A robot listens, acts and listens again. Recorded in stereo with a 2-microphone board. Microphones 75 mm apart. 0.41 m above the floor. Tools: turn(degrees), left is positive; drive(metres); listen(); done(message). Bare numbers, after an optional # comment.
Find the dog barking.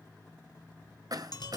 listen()
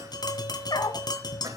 # The dog barking: about 70° left or 110° left.
turn(70)
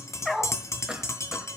done("Found it: a dog barking, straight ahead.")